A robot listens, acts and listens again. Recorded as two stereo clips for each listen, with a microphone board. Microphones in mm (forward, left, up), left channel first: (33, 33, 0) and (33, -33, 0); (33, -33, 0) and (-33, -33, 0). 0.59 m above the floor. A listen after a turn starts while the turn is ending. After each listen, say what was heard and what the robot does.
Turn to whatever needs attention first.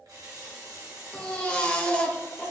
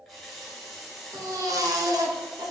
The baby crying: 160° left. Turn 160° left.
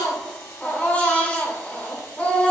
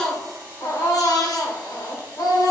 The baby crying is now 20° left. Turn 20° left.
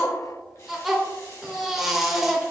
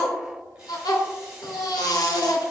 Facing the baby crying.